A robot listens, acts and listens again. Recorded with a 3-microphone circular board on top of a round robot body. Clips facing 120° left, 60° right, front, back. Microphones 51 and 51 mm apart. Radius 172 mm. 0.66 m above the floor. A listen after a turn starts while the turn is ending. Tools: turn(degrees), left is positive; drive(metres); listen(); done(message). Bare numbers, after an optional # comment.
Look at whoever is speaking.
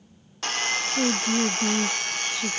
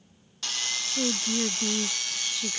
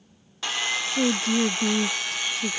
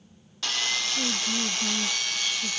# The woman speaking: 40° left.
turn(40)
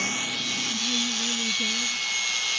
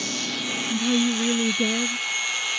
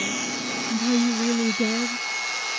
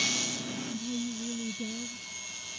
# The woman speaking is now 20° right.
turn(-20)
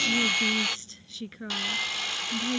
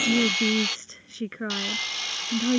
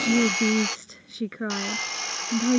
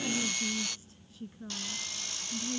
# The woman speaking is now 10° right.
turn(-10)
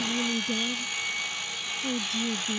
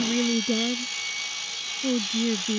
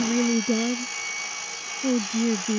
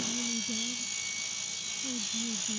done("Found it: a woman speaking, straight ahead.")